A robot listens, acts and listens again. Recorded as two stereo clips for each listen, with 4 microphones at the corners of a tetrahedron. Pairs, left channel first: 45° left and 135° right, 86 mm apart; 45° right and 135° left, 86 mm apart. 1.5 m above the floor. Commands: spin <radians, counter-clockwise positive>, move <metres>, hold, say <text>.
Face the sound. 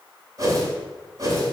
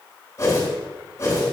spin -1.66
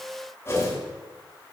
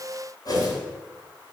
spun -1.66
spin -0.17
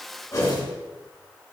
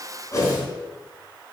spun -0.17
say Facing the whoosh.